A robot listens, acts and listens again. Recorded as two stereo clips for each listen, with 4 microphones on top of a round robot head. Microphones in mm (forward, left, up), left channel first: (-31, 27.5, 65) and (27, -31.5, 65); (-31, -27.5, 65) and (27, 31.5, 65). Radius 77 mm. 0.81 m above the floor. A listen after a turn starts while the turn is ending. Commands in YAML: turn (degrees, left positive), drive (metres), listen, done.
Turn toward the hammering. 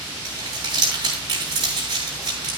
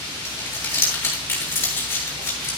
listen: true
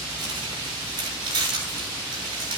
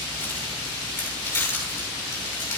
listen: true
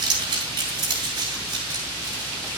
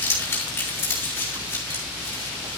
done: "I can't make out hammering to turn to."